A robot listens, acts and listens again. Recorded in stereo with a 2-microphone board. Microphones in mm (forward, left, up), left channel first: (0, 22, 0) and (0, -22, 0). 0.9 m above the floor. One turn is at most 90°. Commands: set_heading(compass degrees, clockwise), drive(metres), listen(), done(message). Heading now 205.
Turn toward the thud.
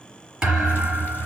set_heading(225)
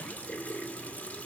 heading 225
listen()
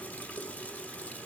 done("I heard a thud, but can't make it out now. It was about straight ahead or 140° right.")